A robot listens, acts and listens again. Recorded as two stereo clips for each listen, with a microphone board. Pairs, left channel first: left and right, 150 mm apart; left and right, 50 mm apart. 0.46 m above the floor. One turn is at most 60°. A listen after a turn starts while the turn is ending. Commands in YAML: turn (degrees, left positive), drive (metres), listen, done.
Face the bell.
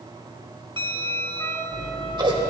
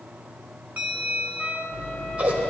turn: -35
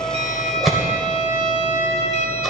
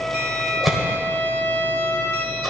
listen: true
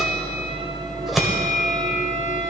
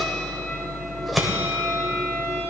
listen: true
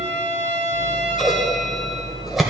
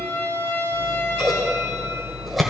done: "I heard a bell, but can't make it out now. It was about straight ahead or 110° right."